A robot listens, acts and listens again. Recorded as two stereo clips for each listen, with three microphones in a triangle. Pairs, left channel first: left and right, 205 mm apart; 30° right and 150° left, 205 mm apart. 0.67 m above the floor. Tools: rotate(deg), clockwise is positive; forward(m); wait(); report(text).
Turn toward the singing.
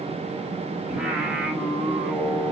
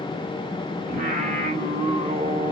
rotate(170)
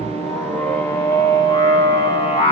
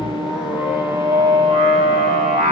rotate(-135)
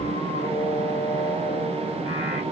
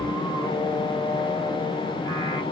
rotate(-35)
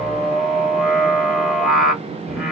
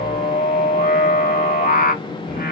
report("Facing the singing, 1 to 2 m away.")